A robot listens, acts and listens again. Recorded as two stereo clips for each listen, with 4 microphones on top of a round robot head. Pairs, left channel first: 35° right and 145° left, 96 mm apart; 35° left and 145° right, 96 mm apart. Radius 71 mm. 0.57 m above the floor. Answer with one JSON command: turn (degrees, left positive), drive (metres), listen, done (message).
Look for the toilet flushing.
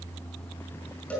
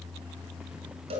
{"listen": true}
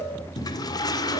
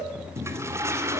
{"turn": -80}
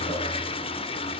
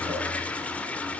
{"turn": -35}
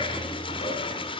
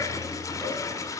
{"turn": -15}
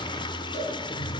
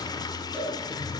{"done": "Found it: a toilet flushing, straight ahead."}